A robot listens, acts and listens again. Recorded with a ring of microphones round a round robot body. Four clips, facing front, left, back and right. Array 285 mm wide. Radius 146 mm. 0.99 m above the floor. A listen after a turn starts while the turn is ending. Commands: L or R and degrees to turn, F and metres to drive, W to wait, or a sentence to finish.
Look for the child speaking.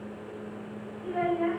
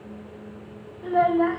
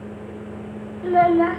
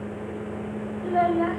L180
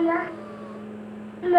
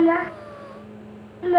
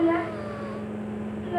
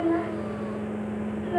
L45
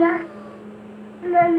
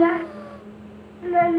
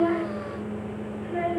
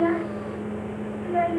L20
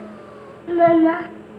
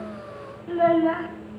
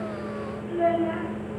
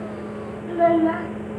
Found it: a child speaking, straight ahead, under 1 m away.